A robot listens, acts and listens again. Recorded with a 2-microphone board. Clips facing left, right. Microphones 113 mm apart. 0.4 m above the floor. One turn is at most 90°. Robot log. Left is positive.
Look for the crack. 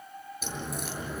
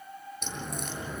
cmd yaw +30
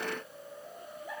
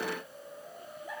cmd idle
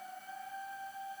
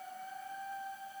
end: I heard a crack, but can't make it out now. It was about 25° right or 145° left.